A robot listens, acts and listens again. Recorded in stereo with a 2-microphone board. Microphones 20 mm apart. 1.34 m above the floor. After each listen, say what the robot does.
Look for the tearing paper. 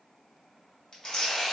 Turn 40° left.
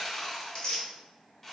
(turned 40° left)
Turn 85° left.
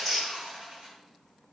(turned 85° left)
Found it: tearing paper, straight ahead.